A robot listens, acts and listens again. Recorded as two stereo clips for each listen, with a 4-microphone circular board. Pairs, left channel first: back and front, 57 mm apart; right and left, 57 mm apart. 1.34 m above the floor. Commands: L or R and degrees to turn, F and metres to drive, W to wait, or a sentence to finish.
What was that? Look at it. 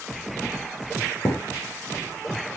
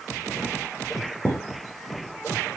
L145
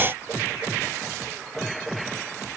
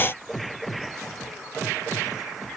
Facing where the thud came from. I can't hear it now.